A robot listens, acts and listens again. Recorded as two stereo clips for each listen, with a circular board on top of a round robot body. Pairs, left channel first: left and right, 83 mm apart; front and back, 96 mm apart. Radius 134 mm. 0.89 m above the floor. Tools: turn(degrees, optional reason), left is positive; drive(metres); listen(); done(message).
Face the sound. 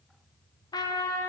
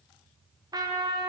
turn(degrees=130, reason="The trumpet: 130° left.")
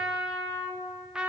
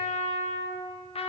turn(degrees=-10, reason="The trumpet is now 10° right.")
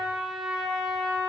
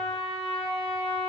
done("Found it: a trumpet, straight ahead, 1 to 2 m away.")